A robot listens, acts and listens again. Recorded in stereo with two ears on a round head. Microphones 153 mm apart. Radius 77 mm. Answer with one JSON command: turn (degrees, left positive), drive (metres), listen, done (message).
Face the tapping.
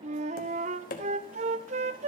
{"turn": 50}
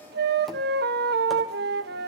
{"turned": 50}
{"listen": true}
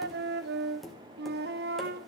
{"done": "Found it: tapping, straight ahead."}